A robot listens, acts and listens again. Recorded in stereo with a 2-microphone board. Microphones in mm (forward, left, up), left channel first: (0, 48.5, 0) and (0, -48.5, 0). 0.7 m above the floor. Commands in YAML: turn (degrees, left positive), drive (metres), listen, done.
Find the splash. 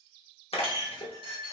turn: 70
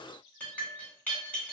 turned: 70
listen: true
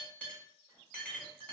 done: "I heard a splash, but can't make it out now. It was about straight ahead or 40° left."